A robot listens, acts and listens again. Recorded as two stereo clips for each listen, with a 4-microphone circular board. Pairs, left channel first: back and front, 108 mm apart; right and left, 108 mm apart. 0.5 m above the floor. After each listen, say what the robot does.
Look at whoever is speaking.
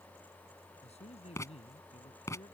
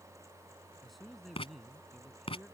Turn 180° left.
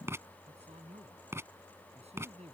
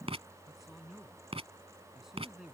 Found it: a man speaking, straight ahead.